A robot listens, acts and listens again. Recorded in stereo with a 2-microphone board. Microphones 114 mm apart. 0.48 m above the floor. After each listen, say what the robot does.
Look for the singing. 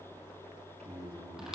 Turn 75° right.
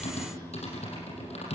Keep listening.
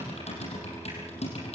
Keep listening.
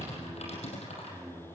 Turn 25° right.
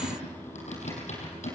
Found it: singing, straight ahead, over 4 m away.